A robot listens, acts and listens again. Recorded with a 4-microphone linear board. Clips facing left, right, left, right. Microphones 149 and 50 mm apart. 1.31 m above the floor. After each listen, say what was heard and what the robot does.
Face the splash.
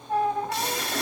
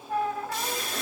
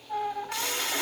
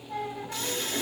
The splash: about 70° left or 110° left. Turn 70° left.
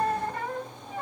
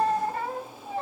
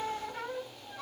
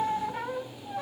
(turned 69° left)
Keep listening.
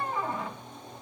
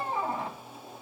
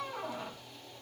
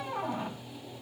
I heard a splash, but can't make it out now. It was about straight ahead or 40° left.